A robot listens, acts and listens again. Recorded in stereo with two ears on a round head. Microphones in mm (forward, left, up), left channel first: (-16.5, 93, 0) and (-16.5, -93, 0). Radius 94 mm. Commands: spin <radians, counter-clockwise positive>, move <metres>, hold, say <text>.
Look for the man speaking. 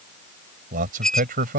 spin -0.70
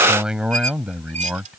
say Found it: a man speaking, straight ahead.